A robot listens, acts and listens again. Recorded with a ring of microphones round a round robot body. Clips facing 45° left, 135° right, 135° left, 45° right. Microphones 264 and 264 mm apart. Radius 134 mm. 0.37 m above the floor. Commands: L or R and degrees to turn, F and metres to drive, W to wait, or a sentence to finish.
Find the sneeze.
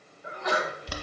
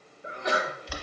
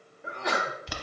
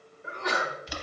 L165
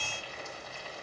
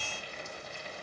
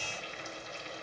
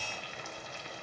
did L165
I heard a sneeze from this way, but can't make it out now.